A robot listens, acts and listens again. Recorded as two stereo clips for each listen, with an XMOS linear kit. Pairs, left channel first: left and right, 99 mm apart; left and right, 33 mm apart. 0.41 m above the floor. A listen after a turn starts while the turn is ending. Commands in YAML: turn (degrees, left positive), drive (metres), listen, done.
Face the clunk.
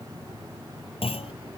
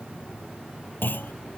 turn: 90
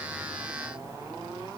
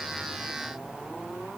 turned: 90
done: "Facing where the clunk came from. I can't hear it now."